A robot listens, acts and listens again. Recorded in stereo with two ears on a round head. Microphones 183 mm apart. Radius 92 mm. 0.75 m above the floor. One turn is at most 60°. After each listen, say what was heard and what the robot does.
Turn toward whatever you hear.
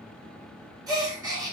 The gasp: about 20° right or 160° right. Turn 20° right.
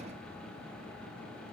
Keep listening.
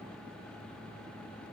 I heard a gasp, but can't make it out now. It was about straight ahead or 140° right.